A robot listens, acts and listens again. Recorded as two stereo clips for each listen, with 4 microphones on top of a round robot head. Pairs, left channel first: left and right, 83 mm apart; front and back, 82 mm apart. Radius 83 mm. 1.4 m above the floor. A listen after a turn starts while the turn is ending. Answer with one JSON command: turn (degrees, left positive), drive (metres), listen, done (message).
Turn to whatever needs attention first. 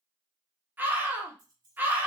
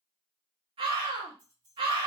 {"turn": -160}
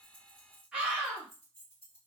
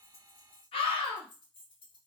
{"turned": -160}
{"turn": -10}
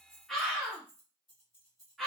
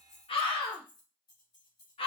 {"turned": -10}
{"done": "Found it: a scream, straight ahead, under 1 m away."}